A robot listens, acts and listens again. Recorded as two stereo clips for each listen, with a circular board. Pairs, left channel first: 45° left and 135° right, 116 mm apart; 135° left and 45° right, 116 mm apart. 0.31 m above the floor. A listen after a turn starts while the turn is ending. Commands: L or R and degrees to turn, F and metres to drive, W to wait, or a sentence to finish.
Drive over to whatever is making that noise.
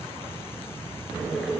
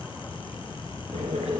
R45
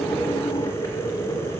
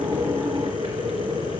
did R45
R10
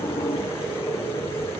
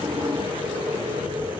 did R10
F1.0
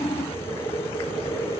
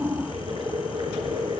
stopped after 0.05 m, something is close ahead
Something is in my way. I am facing the boiling but have not reached it.